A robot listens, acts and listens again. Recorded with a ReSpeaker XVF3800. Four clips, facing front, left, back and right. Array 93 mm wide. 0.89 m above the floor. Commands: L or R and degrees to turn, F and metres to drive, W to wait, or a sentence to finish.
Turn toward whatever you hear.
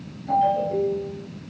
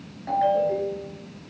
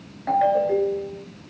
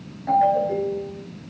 R170
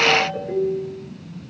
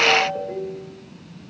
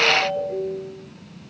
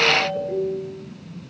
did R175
Found it: a ringtone, straight ahead, over 4 m away.